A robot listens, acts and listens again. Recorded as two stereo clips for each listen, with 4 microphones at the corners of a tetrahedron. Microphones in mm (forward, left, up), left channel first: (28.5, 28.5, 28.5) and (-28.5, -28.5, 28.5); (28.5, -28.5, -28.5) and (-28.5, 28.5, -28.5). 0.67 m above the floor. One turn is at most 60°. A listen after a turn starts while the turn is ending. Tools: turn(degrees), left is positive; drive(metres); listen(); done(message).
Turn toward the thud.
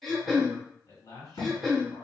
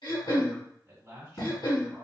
done("Facing the thud.")